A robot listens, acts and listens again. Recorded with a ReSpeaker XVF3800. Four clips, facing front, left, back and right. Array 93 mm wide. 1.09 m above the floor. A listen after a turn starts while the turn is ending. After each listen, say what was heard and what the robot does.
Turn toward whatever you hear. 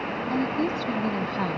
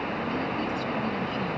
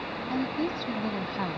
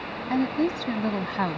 The woman speaking: 85° right. Turn 85° right.
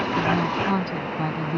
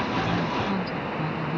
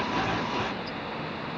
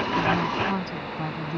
The woman speaking is now 15° right. Turn 15° right.
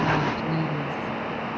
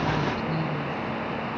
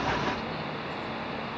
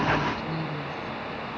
Found it: a woman speaking, straight ahead.